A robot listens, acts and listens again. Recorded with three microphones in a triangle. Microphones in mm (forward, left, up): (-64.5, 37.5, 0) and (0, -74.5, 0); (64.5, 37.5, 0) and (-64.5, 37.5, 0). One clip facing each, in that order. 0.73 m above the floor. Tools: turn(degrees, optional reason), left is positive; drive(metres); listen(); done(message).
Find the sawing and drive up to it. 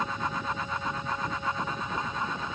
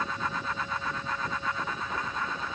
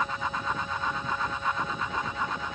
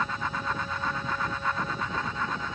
listen()
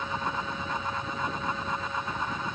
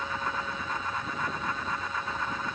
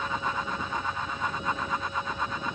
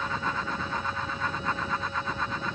listen()
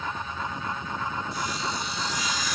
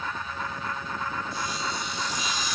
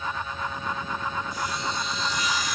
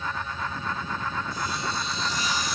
turn(degrees=-125, reason="The sawing: 125° right.")
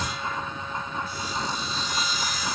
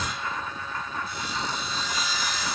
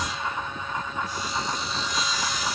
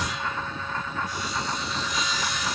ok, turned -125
turn(degrees=-50, reason="The sawing is now 50° right.")
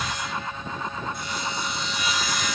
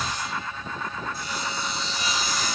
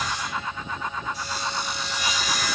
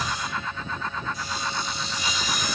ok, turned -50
drive(metres=1.0)
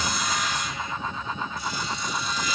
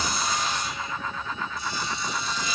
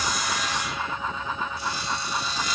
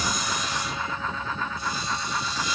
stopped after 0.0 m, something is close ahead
done("Blocked. The sawing is further on, straight ahead.")